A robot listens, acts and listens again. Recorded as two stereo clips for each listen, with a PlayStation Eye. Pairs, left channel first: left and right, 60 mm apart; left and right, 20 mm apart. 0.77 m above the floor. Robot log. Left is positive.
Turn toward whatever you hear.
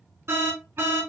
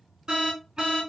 note: The alarm: about 45° right or 135° right.
cmd yaw -45
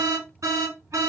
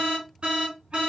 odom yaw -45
note: So it is at 80° right.
cmd yaw -80
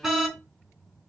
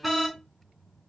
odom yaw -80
end: Facing the alarm, 2 to 4 m away.